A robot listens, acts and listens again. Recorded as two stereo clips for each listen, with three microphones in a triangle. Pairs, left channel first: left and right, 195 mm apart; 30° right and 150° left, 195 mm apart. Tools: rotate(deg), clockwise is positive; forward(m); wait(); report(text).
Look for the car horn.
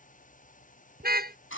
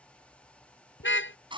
rotate(50)
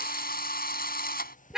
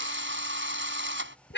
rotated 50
report("Facing the car horn.")